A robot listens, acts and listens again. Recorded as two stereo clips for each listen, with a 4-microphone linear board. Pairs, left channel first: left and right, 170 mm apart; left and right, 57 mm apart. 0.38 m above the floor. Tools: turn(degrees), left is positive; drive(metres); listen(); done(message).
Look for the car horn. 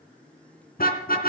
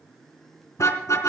turn(degrees=65)
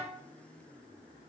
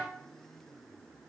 listen()
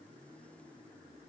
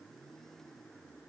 listen()
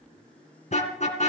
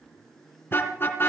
turn(degrees=45)
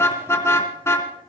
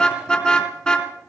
turn(degrees=15)
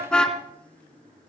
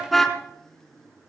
done("Facing the car horn.")